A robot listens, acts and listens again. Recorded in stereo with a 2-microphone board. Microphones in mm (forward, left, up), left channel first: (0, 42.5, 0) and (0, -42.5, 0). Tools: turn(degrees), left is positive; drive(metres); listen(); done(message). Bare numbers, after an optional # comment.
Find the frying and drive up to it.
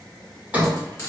# The frying: about 35° left or 145° left.
turn(35)
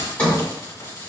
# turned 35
# So it is at 105° left.
turn(105)
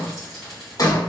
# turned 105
drive(1.0)
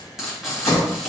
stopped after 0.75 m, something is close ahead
# The frying is now 10° right.
turn(-10)
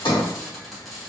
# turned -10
done("I am next to the frying.")